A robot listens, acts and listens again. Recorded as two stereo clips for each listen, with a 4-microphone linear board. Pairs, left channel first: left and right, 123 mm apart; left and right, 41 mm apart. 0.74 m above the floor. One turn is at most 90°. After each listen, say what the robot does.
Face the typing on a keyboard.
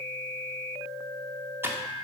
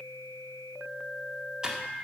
Turn 20° right.
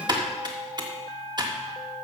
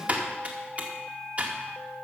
Turn 90° right.
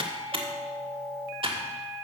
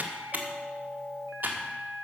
Turn 50° right.
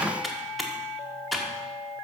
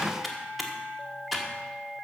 Found it: typing on a keyboard, straight ahead.